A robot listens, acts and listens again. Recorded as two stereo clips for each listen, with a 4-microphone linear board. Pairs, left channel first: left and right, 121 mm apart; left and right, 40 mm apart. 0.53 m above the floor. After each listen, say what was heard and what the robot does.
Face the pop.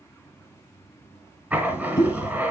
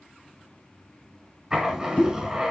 The pop: about 35° left or 145° left. Turn 35° left.
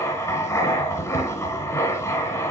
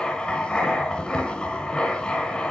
Keep listening.
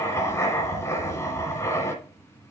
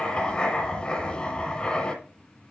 I heard a pop, but can't make it out now. It was about straight ahead or 110° left.